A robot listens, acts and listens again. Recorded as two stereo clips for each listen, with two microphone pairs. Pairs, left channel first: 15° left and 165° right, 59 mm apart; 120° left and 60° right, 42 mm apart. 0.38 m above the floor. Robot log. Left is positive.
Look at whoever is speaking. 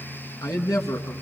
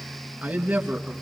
end: Facing the man speaking.